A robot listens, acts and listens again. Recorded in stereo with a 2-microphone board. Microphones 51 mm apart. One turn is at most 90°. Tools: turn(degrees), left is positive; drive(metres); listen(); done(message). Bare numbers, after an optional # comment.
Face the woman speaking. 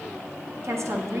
# The woman speaking: about 70° right or 110° right.
turn(-70)
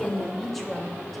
done("Found it: a woman speaking, straight ahead.")